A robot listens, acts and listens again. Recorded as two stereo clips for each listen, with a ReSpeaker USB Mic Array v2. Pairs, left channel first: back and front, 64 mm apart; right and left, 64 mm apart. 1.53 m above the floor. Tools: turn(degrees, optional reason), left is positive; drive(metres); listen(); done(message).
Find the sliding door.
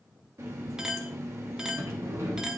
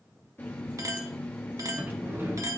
turn(degrees=40, reason="The sliding door: 40° left.")
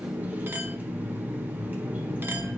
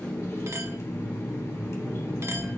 turn(degrees=15, reason="The sliding door is now 15° left.")
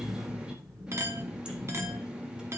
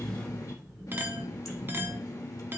done("Facing the sliding door, 2 to 4 m away.")